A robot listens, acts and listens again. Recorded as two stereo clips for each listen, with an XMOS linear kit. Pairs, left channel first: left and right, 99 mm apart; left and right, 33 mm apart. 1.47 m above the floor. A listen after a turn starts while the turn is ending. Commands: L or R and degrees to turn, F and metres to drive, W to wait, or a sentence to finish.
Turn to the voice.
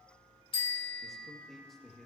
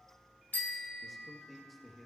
L30
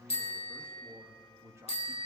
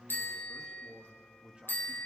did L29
R30
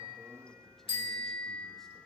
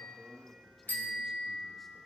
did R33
Facing the man speaking, 2 to 4 m away.